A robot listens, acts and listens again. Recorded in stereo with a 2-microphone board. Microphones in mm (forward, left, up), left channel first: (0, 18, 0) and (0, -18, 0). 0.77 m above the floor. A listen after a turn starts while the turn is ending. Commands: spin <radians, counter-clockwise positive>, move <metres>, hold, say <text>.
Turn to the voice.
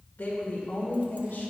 spin 1.57
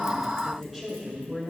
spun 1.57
spin -0.26
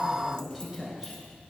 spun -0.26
spin -0.17
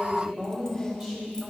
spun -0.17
spin -0.35
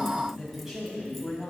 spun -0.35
spin -0.17
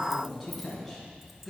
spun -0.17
say Facing the woman speaking, over 4 m away.